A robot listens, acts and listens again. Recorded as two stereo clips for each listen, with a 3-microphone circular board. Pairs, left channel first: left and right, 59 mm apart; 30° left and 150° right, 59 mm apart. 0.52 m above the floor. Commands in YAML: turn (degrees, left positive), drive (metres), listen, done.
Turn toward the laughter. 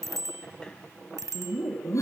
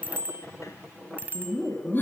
turn: 80
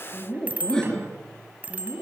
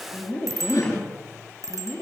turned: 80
done: "Facing the laughter, 2 to 4 m away."